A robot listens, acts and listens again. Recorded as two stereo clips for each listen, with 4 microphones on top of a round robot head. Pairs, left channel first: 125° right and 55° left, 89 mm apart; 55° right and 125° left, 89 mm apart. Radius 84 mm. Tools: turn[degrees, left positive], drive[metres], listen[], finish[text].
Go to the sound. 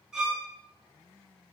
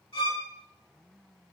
Thought: The violin: 30° right.
Action: turn[-30]
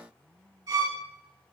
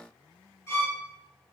Action: drive[1.0]
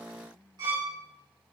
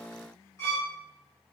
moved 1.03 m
Action: drive[1.0]
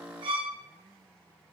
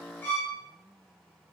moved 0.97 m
Thought: The violin is now 15° left.
Action: turn[15]
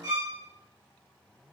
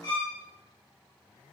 Action: drive[1.0]
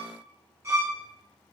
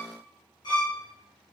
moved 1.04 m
Thought: The violin is now 10° right.
Action: turn[-10]
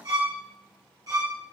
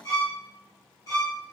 Action: drive[1.0]
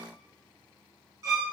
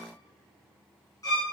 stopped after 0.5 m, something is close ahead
Action: finish[Arrived at the violin, straight ahead.]